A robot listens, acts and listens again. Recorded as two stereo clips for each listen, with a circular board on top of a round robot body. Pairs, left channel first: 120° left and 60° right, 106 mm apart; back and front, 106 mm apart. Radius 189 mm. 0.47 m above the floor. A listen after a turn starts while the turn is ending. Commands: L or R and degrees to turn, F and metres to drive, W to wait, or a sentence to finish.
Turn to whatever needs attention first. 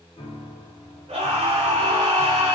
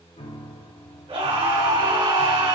R25
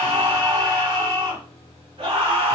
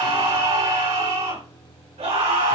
R10
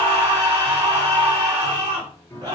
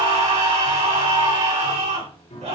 Facing the scream, over 4 m away.